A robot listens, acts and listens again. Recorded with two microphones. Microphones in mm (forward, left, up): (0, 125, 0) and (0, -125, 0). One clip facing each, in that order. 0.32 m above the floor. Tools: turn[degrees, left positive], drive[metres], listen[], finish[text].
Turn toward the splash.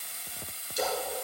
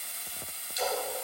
Thought: The splash: about 55° left or 125° left.
Action: turn[55]
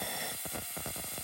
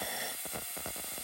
Action: listen[]
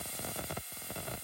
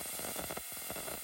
Action: finish[I heard a splash, but can't make it out now. It was about straight ahead or 70° left.]